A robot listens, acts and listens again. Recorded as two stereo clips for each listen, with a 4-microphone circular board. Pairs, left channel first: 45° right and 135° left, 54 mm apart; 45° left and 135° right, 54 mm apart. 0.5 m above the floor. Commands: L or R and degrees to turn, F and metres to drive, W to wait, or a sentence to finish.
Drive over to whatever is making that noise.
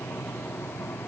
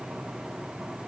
W
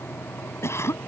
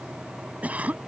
R75
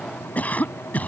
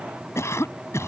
L15
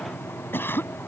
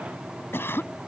F1.0
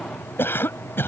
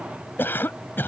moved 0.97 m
F1.0
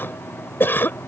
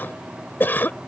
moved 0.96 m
F1.0
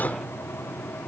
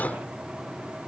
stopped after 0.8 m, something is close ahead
I am next to the cough.